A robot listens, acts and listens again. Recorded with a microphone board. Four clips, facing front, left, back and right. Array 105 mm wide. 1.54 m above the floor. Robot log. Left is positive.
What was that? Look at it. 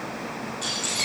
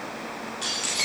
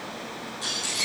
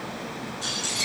note: The keys jangling: 80° left.
cmd yaw +80
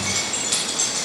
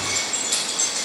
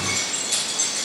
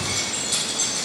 note: The keys jangling is now 20° left.
cmd yaw +20
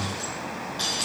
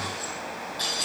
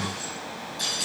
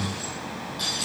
end: Facing the keys jangling, over 4 m away.